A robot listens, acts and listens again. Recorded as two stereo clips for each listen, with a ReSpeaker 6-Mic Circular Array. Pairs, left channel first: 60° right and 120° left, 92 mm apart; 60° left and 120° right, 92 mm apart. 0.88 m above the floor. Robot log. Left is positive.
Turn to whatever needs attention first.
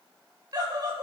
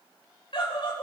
note: The scream: 80° left.
cmd yaw +80
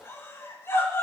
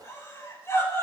end: Facing the scream.